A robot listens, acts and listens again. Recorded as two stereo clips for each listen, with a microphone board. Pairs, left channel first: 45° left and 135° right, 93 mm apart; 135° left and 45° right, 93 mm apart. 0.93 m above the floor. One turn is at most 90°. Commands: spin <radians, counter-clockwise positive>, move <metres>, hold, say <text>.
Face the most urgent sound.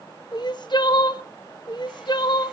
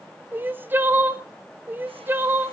spin 0.35
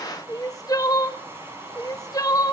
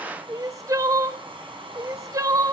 say Found it: crying, straight ahead.